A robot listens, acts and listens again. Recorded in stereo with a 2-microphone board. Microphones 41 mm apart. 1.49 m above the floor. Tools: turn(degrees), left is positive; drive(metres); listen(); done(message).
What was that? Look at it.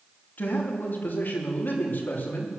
turn(degrees=50)
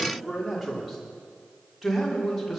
done("Facing the man speaking, over 4 m away.")